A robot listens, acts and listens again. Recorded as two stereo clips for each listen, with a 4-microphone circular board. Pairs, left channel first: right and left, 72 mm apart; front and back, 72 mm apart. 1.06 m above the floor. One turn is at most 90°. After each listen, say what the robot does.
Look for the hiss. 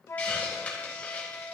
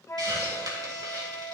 Turn 90° right.
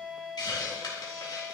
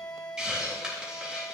Turn 90° right.
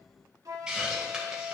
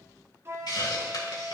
Turn 10° left.
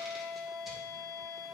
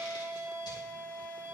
Keep listening.
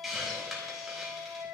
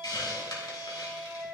Facing the hiss.